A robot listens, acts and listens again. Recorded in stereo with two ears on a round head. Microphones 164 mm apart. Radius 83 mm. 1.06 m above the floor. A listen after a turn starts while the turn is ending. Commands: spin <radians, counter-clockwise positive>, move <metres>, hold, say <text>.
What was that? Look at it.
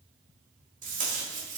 spin -0.79
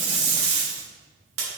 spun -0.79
spin -1.57
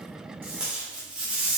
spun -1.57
say Facing the tape being pulled, 2 to 4 m away.